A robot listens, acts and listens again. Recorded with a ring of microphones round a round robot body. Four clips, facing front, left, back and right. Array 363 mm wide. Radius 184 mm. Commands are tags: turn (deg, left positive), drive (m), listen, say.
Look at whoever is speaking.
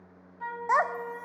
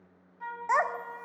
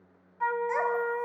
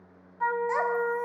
<turn deg="25"/>
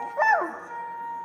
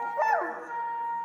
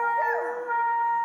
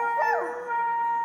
<say>Found it: a child speaking, straight ahead, 1 to 2 m away.</say>